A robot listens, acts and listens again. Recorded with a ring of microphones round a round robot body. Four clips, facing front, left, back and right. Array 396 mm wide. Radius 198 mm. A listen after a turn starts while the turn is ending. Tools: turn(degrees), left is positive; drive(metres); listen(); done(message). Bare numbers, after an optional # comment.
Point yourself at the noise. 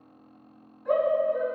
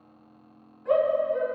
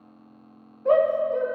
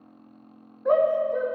# The shout: 135° right.
turn(-135)
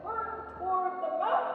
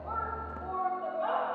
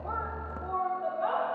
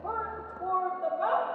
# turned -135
# The shout is now 40° right.
turn(-40)
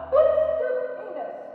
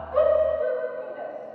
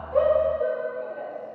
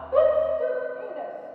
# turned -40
# The shout is now 15° right.
turn(-15)
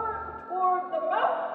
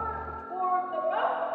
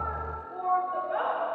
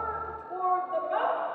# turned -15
done("Found it: a shout, straight ahead.")